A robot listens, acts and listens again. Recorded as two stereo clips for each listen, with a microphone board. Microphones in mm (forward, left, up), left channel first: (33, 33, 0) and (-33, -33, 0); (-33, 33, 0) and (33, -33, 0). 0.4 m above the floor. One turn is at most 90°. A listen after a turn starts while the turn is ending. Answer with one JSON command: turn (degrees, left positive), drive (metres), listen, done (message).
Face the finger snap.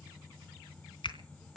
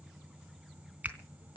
{"turn": 25}
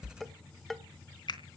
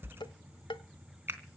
{"turn": 20}
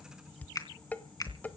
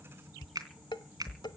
{"done": "Facing the finger snap."}